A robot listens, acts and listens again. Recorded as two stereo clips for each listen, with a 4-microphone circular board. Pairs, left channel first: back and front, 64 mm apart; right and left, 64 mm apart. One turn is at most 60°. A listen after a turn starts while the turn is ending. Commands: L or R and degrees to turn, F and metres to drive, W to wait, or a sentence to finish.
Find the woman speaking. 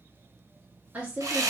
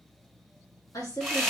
R60
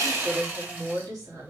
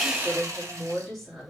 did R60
Found it: a woman speaking, straight ahead, 2 to 4 m away.